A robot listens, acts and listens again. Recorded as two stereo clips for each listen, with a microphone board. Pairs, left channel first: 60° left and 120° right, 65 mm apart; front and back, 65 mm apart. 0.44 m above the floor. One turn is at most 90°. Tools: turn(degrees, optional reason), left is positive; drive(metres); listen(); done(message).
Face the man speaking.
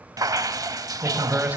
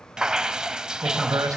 turn(degrees=90, reason="The man speaking: 175° left.")
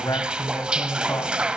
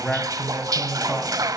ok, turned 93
turn(degrees=80, reason="The man speaking is now 80° left.")
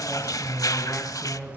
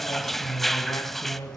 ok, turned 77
done("Found it: a man speaking, straight ahead, over 4 m away.")